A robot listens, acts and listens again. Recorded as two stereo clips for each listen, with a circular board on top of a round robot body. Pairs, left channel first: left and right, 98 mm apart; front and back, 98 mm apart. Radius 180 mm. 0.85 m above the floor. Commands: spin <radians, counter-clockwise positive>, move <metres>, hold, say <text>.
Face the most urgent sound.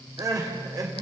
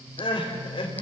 spin -0.61
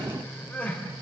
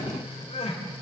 spin 0.26
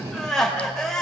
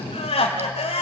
say Found it: crying, straight ahead, 2 to 4 m away.